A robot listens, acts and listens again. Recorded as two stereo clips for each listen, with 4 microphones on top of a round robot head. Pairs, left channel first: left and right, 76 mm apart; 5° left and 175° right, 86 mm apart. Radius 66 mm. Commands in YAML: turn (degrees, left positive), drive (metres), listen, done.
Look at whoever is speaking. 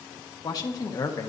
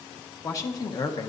turn: 45
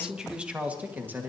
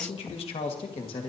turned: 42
turn: -25
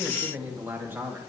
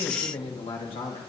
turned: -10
turn: -30
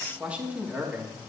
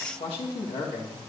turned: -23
turn: -25
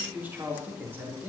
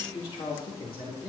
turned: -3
turn: -30
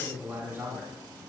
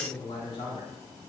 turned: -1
turn: -30
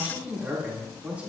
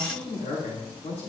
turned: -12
turn: -20
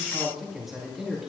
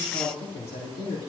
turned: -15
done: "Found it: a man speaking, straight ahead, 2 to 4 m away."